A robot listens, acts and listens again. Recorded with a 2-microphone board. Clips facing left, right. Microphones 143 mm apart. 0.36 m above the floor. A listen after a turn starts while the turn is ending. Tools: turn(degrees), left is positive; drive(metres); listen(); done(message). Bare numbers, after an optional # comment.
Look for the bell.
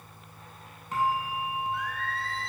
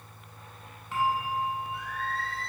# The bell: about 40° left or 140° left.
turn(40)
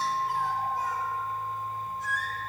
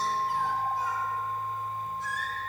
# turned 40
listen()
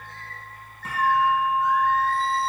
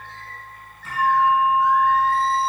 # So it is at 105° left.
turn(105)
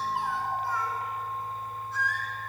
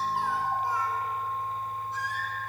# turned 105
listen()
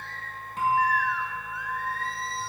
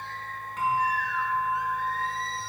# The bell is now 30° left.
turn(30)
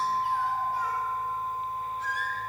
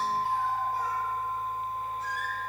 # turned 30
done("Found it: a bell, straight ahead, 2 to 4 m away.")